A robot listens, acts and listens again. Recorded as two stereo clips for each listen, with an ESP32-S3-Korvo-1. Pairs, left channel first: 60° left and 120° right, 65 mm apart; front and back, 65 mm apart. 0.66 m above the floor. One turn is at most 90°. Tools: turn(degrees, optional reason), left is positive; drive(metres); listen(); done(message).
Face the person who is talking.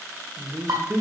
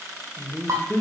turn(degrees=-75, reason="The man speaking: 75° right.")
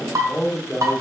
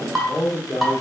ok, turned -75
done("Found it: a man speaking, straight ahead.")